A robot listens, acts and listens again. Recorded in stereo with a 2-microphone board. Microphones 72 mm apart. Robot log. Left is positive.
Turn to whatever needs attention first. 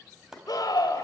note: The scream: about 60° left or 120° left.
cmd yaw +60
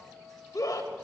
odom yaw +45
note: So it is at 65° left.
cmd yaw +65
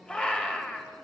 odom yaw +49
note: The scream is now 15° left.
cmd yaw +15
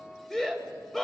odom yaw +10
end: Facing the scream.